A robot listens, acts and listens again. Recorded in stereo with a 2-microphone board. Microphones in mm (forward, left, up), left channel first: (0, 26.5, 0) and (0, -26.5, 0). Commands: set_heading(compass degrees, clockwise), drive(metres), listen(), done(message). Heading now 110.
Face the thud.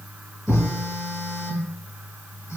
set_heading(90)
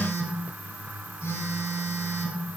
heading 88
listen()
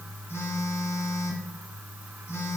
done("I heard a thud, but can't make it out now. It was about straight ahead or 135° left.")